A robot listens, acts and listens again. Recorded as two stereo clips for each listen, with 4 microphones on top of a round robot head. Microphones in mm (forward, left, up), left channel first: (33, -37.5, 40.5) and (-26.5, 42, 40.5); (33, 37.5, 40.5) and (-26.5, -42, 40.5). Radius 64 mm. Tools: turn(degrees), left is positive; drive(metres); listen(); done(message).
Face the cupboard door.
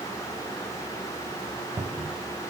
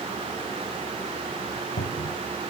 turn(degrees=60)
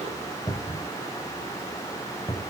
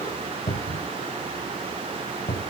done("Found it: a cupboard door, straight ahead.")